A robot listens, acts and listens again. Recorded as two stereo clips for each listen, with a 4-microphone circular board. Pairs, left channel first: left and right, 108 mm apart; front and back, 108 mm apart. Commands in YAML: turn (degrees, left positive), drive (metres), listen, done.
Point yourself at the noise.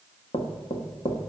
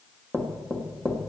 turn: 90
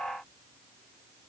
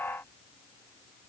listen: true
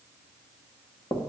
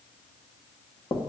turn: 30
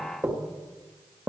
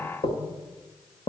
turn: -10
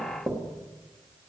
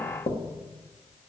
done: "Found it: knocking, straight ahead, 1 to 2 m away."